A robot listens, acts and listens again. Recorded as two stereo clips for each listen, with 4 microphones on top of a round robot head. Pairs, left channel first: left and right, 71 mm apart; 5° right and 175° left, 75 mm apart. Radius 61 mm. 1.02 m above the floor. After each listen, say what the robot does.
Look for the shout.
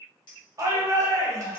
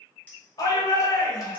Turn 45° right.
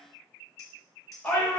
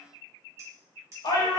Turn 20° left.
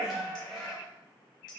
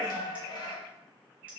Found it: a shout, straight ahead.